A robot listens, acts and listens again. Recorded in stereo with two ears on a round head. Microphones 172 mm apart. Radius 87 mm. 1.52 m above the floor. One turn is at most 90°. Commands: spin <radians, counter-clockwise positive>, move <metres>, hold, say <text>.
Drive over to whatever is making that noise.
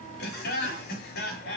spin 1.05
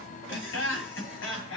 spin 1.13
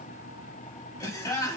spin 0.26
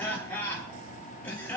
spin 0.17
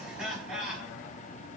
move 1.0
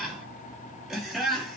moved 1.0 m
move 1.0
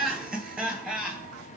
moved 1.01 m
move 1.0
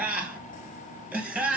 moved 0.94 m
move 1.0
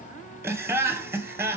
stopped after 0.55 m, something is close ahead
spin -0.17
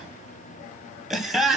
say Arrived at the laughter, straight ahead.